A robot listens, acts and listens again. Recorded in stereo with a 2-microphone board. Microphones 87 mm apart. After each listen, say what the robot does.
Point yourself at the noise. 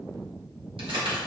Turn 90° right.
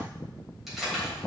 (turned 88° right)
Found it: keys jangling, straight ahead, 2 to 4 m away.